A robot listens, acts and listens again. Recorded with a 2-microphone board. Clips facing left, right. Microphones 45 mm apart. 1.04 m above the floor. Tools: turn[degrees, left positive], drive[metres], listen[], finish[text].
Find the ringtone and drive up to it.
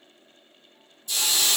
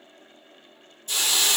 Action: listen[]
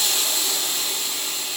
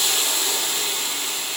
Action: listen[]
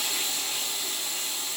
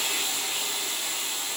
Action: finish[I can't make out a ringtone to turn to.]